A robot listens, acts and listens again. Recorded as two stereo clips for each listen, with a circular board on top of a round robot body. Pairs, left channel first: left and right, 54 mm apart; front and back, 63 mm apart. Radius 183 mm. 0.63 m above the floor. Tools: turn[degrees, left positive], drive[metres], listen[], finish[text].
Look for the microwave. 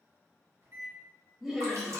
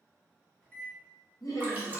Thought: The microwave: 60° right.
Action: turn[-60]
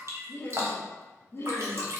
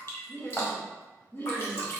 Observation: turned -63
Action: listen[]
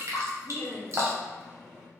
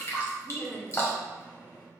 Action: finish[Found it: a microwave, straight ahead.]